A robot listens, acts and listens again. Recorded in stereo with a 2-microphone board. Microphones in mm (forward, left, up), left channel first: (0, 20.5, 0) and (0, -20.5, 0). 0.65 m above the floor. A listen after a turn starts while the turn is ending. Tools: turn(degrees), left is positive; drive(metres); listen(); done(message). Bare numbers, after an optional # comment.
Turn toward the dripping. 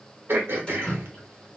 # The dripping: about 25° left or 155° left.
turn(25)
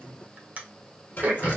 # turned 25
# So it is at 130° left.
turn(130)
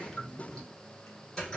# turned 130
# The dripping is now 15° left.
turn(15)
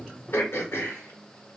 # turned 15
listen()
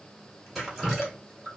done("Found it: dripping, straight ahead.")